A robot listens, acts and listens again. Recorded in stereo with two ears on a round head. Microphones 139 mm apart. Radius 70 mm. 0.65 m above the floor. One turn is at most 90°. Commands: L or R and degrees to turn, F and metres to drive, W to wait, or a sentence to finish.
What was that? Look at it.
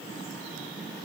W
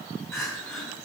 L15
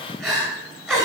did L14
Found it: crying, straight ahead.